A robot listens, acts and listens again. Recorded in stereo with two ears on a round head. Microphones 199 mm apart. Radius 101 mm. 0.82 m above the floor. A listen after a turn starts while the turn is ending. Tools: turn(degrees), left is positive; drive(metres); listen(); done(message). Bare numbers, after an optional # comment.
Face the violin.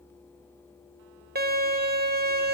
# The violin: about 45° right or 135° right.
turn(-45)
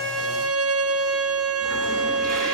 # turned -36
# So it is at 95° right.
turn(-95)
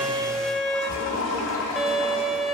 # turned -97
done("Facing the violin.")